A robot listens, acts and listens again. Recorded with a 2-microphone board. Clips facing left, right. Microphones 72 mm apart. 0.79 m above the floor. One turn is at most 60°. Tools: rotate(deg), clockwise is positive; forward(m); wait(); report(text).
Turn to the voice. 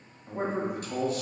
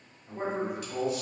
rotate(-45)
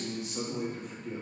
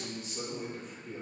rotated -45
rotate(-60)
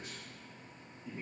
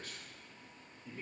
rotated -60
rotate(-20)
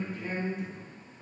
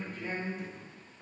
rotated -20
report("Facing the man speaking, 1 to 2 m away.")